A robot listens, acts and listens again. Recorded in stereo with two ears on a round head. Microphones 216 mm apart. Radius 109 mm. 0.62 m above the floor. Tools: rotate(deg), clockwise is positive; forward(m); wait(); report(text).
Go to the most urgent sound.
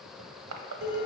wait()
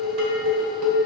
wait()
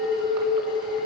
report("I can't make out anything urgent, only crushing and dishes clattering.")